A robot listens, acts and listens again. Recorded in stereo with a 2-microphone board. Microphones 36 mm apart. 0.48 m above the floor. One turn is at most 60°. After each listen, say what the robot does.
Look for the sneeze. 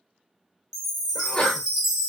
Turn 25° left.
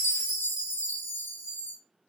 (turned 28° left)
Keep listening.
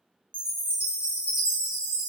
I heard a sneeze, but can't make it out now. It was about 5° right or 130° left.